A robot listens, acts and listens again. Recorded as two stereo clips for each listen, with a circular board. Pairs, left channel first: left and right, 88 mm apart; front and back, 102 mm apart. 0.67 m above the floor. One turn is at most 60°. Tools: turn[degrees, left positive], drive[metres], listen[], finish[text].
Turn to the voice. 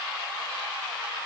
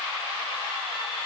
Action: listen[]
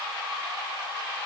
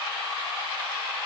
Action: listen[]
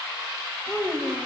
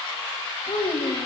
Thought: The child speaking: 15° left.
Action: turn[15]
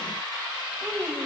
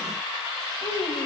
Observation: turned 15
Action: finish[Found it: a child speaking, straight ahead.]